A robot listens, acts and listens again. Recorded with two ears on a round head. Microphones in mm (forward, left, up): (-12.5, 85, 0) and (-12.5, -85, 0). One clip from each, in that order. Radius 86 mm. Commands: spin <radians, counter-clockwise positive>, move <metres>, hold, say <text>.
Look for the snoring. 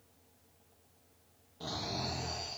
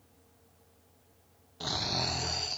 spin -1.05
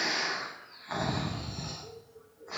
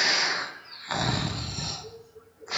spin -1.05
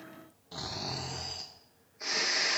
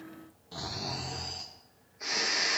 say Facing the snoring.